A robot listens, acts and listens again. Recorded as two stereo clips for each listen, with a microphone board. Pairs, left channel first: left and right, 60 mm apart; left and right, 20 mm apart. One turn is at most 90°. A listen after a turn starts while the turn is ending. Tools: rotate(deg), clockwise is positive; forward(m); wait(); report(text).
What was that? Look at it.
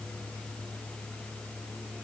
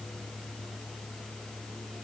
wait()
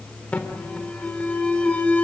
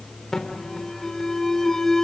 rotate(-25)
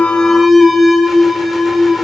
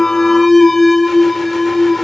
report("Found it: an alarm, straight ahead.")